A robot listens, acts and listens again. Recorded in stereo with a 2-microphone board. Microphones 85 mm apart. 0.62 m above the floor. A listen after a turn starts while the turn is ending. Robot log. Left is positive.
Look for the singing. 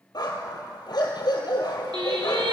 note: The singing: about 70° right or 110° right.
cmd yaw -70
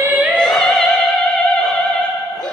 note: So it is at 15° left.
cmd yaw +15
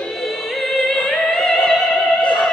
note: The singing is now 10° left.
cmd yaw +10
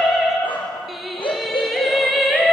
end: Facing the singing.